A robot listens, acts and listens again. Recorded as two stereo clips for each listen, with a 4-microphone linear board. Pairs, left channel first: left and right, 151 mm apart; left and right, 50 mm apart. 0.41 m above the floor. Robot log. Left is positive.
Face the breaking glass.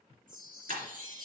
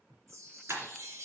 note: The breaking glass: about 65° right or 115° right.
cmd yaw -65
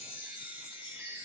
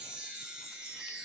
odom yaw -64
cmd idle
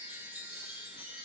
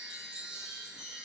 end: I heard breaking glass, but can't make it out now. It was about 5° right or 50° right.